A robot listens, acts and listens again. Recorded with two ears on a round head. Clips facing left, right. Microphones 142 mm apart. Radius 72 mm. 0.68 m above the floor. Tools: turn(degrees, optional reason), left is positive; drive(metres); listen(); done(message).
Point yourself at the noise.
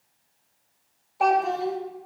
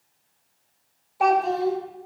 turn(degrees=30)
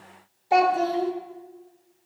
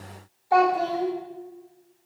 turn(degrees=155, reason="So it is at 155° left.")
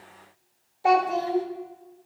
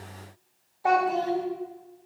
turn(degrees=25, reason="The child speaking is now 25° left.")
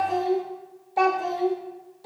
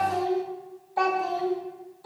turn(degrees=25, reason="The child speaking is now 25° left.")
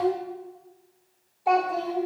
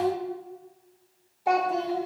done("Facing the child speaking, 1 to 2 m away.")